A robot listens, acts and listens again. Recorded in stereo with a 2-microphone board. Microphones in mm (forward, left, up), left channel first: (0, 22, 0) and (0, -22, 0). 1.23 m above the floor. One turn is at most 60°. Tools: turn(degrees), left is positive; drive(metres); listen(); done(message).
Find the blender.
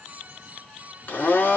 turn(degrees=45)
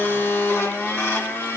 turn(degrees=60)
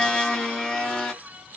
turn(degrees=20)
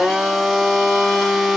done("Facing the blender, 1 to 2 m away.")